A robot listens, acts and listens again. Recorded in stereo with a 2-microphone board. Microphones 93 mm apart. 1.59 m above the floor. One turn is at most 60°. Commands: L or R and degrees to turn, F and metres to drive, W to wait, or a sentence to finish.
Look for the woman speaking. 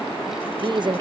R50
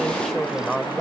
Facing the woman speaking.